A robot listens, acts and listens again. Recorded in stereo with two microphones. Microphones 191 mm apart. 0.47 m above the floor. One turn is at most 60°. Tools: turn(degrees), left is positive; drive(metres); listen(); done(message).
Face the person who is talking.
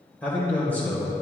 turn(degrees=30)
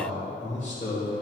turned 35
turn(degrees=60)
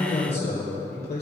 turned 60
turn(degrees=60)
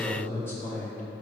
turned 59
turn(degrees=15)
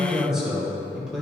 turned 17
done("Found it: a man speaking, straight ahead.")